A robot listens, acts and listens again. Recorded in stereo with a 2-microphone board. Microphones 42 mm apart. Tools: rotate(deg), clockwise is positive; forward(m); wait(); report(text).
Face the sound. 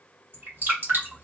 rotate(55)
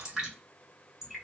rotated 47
rotate(15)
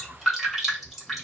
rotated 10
report("Facing the dripping.")